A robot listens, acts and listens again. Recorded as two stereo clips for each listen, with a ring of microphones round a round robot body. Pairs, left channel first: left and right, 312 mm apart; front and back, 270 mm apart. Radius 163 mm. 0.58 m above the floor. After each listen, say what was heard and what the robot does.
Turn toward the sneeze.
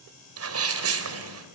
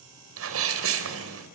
The sneeze: 135° right. Turn 135° right.
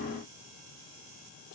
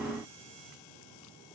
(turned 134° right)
Facing where the sneeze came from. I can't hear it now.